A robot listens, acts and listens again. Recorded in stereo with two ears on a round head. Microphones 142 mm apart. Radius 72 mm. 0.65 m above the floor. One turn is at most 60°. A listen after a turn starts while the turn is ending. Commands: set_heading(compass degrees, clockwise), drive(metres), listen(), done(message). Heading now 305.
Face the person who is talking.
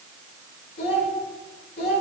set_heading(245)
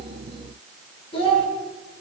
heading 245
set_heading(210)
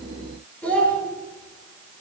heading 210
set_heading(200)
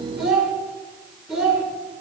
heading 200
done("Facing the child speaking, 1 to 2 m away.")